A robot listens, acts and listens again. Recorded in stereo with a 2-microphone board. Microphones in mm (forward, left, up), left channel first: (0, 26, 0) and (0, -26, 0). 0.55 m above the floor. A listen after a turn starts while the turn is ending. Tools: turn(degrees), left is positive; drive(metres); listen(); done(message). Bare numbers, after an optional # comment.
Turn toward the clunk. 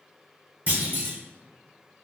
# The clunk: about 40° right or 140° right.
turn(-40)
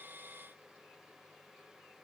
listen()
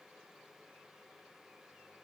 done("I heard a clunk, but can't make it out now. It was about straight ahead or 100° right.")